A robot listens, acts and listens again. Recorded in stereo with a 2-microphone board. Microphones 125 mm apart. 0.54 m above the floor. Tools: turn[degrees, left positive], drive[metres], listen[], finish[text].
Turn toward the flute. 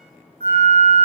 Action: turn[-90]
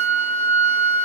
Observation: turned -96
Thought: So it is at 15° left.
Action: turn[15]
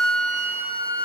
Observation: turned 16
Action: finish[Facing the flute, 1 to 2 m away.]